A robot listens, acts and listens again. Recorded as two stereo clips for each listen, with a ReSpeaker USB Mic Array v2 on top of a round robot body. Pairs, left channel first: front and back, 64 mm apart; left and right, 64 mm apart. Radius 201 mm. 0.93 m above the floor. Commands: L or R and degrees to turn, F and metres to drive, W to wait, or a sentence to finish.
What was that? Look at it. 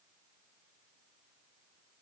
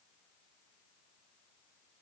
W
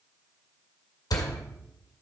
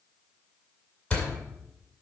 L15
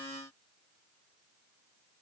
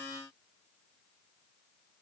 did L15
Facing where the door slam came from. I can't hear it now.